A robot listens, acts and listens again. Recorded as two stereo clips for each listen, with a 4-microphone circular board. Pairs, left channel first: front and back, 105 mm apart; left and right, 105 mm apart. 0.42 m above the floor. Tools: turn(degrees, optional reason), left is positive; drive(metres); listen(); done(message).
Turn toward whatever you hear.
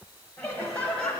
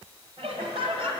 turn(degrees=-80, reason="The laughter: 80° right.")
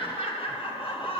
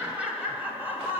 turn(degrees=-25, reason="The laughter is now 25° right.")
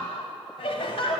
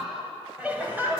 turn(degrees=-20, reason="The laughter is now 20° right.")
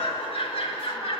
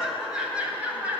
turn(degrees=-15, reason="The laughter is now 15° right.")
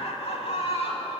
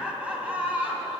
turn(degrees=-15, reason="The laughter is now 15° right.")
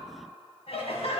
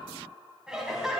done("Facing the laughter, 2 to 4 m away.")